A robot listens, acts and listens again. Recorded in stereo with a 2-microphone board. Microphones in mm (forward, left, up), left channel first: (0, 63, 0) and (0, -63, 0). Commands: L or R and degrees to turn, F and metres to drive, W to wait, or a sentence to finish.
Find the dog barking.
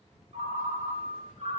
W
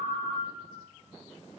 W
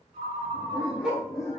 L30
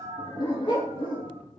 L135
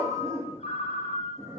R20
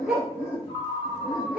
Facing the dog barking, 1 to 2 m away.